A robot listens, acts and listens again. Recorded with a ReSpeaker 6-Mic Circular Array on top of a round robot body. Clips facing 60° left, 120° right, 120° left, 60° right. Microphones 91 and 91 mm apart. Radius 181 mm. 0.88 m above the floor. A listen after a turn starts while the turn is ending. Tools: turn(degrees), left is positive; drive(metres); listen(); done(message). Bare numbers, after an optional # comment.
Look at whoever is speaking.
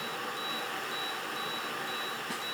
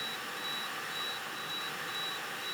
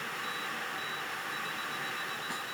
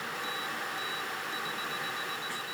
listen()
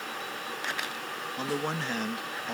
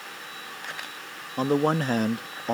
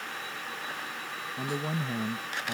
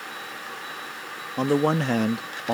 # The man speaking: 75° right.
turn(-75)
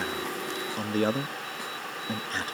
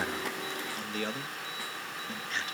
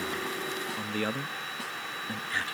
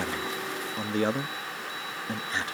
# The man speaking is now 10° left.
turn(10)
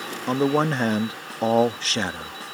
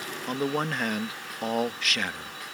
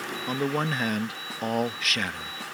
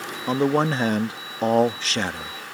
done("Facing the man speaking.")